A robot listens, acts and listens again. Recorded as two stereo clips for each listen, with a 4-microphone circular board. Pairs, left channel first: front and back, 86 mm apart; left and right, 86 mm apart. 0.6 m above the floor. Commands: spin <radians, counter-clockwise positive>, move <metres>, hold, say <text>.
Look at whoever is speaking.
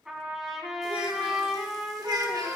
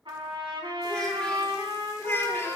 spin 2.53
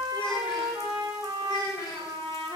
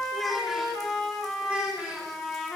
spin -0.35
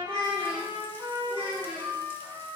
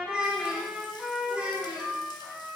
spin -0.35
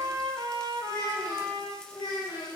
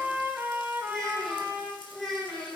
say Found it: a child speaking, straight ahead.